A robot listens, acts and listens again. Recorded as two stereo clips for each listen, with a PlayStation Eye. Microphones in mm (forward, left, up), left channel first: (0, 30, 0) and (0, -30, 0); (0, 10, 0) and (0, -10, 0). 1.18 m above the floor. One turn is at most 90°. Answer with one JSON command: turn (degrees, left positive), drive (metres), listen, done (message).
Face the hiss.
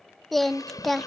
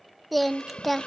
{"turn": 90}
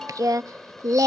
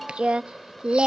{"done": "Facing the hiss."}